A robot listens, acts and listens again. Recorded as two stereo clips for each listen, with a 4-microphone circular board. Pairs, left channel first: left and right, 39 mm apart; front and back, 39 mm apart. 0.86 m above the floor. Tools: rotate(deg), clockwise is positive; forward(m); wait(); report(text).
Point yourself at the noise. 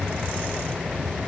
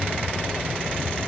wait()
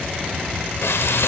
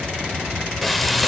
rotate(-90)
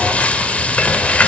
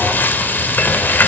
rotate(-35)
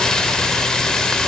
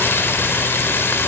rotate(-15)
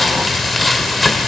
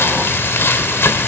report("Facing the frying.")